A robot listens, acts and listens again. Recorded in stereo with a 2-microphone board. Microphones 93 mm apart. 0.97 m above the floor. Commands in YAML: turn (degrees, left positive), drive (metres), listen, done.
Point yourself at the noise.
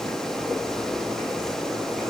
listen: true
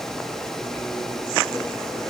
listen: true
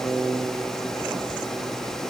done: "I can't make out anything."